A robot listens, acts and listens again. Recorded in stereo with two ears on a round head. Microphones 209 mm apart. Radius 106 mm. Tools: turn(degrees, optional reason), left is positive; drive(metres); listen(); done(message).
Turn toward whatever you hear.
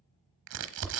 turn(degrees=-55, reason="The crumpling: about 55° right or 125° right.")
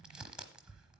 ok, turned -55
done("Found it: crumpling, straight ahead.")